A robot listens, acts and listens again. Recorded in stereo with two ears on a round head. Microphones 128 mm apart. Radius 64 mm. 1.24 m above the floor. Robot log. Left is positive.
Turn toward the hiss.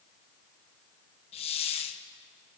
note: The hiss: about 45° left or 135° left.
cmd yaw +45
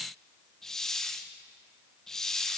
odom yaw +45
end: Facing the hiss, 1 to 2 m away.